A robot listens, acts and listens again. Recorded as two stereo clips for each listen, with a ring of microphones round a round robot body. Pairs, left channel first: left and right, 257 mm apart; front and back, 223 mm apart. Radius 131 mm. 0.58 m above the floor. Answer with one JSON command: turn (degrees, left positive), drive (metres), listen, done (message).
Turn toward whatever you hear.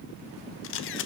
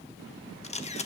{"turn": 55}
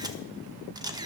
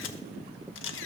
{"turn": -15}
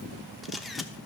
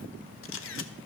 {"done": "Facing the camera shutter, under 1 m away."}